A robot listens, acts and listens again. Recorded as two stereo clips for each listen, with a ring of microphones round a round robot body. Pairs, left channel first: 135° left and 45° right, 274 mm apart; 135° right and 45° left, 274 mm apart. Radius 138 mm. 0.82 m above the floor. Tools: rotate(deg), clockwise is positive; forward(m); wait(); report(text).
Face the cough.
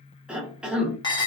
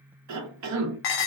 rotate(-40)
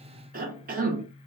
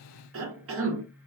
rotate(-10)
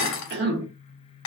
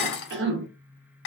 report("Facing the cough, under 1 m away.")